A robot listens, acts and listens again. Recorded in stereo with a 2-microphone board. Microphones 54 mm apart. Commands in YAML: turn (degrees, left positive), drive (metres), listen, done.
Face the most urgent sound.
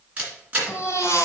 turn: 60
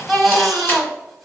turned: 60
done: "Found it: a baby crying, straight ahead."